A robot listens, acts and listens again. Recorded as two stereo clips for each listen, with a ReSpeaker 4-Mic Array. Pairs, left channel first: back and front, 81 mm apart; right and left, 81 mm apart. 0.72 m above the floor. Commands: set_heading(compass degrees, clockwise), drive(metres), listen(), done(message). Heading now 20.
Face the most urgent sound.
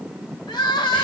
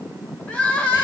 set_heading(185)
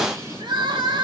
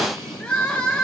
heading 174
set_heading(184)
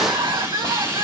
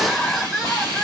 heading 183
done("Facing the crying.")